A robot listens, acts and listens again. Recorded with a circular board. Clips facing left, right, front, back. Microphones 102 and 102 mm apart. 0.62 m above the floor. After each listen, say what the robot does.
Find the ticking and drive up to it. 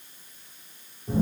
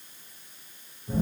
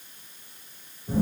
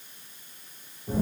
Keep listening.
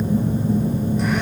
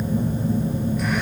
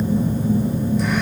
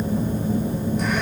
Keep listening.
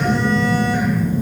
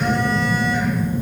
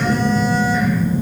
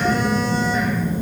I can't make out ticking, only a phone buzzing.